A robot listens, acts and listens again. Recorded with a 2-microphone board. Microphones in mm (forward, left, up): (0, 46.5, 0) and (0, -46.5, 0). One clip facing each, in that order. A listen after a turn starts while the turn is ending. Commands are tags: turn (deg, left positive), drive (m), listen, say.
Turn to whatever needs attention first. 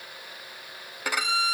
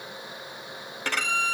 <listen/>
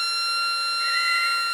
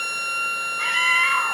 <turn deg="-70"/>
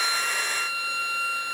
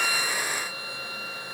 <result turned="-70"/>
<listen/>
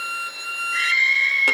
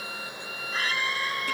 <turn deg="-40"/>
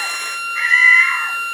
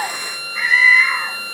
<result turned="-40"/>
<say>Found it: a scream, straight ahead.</say>